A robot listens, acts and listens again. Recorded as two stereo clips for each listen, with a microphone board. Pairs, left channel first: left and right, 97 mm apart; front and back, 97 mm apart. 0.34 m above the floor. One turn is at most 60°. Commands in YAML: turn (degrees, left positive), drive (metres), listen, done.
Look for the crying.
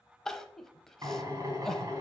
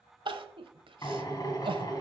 turn: 60
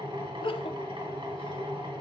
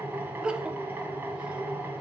turn: 60
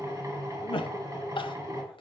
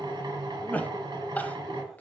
turn: 60
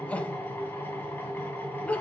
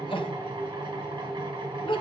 turn: 15
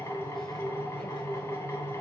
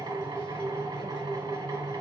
listen: true
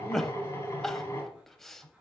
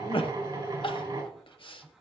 done: "Found it: crying, straight ahead, under 1 m away."